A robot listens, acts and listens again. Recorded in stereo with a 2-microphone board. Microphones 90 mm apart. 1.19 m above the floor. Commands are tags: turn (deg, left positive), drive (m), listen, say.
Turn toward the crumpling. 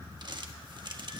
<turn deg="-50"/>
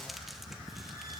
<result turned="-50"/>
<listen/>
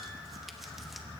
<listen/>
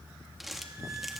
<say>Found it: crumpling, straight ahead.</say>